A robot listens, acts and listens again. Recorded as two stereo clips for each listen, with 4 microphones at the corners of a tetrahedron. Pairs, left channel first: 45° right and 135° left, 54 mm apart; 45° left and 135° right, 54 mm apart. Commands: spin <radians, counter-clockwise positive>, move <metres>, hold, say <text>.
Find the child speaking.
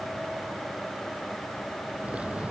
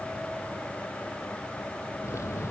hold
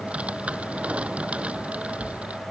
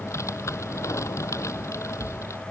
hold
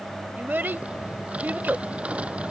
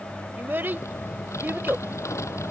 spin -3.05
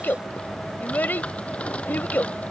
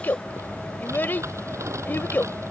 say Found it: a child speaking, straight ahead.